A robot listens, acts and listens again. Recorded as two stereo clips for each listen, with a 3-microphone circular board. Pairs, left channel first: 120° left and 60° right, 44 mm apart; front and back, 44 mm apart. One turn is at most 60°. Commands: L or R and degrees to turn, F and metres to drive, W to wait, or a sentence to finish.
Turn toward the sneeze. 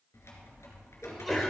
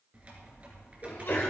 L35
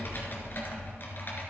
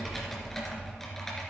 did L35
I heard a sneeze from this way, but can't make it out now.